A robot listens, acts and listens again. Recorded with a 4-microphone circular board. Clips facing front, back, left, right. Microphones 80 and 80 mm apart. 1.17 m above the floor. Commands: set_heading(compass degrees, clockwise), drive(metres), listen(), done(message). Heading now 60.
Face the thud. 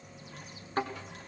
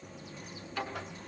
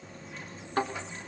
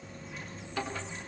set_heading(10)
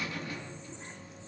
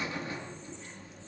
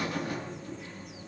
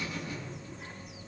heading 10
done("I heard a thud from this way, but can't make it out now.")